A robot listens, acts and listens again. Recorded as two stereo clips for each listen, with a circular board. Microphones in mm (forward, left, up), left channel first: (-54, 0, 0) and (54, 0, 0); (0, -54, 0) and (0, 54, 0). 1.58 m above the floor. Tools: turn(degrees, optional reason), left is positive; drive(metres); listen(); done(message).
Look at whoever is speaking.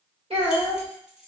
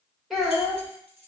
done("Found it: a child speaking, straight ahead.")